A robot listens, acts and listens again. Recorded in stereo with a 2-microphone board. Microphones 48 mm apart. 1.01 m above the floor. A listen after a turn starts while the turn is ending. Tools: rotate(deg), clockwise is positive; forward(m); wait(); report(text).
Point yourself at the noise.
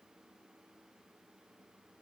wait()
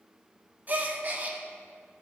rotate(40)
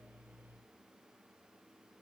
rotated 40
wait()
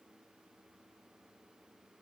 report("I heard a gasp, but can't make it out now. It was about straight ahead or 100° right.")